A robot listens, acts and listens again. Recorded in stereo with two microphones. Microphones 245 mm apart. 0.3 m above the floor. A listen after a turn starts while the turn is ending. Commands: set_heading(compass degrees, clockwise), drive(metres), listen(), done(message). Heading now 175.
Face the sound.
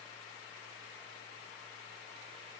listen()
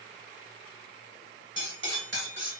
set_heading(225)
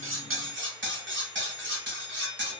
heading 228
set_heading(288)
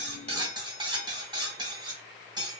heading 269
set_heading(289)
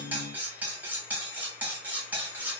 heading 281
done("Found it: cutlery clinking, straight ahead.")